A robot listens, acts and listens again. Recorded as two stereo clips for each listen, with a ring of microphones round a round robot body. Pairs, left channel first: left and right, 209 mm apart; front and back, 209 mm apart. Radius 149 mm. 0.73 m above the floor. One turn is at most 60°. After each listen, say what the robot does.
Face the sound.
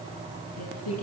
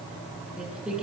Turn 60° left.
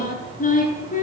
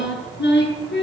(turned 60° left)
Turn 35° left.
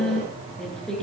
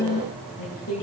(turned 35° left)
Found it: singing, straight ahead, over 4 m away.